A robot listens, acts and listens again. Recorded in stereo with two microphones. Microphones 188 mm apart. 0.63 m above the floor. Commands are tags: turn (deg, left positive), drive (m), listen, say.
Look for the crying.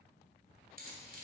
<listen/>
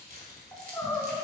<turn deg="30"/>
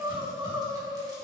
<turn deg="-30"/>
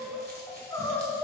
<turn deg="10"/>
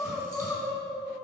<say>Found it: crying, straight ahead.</say>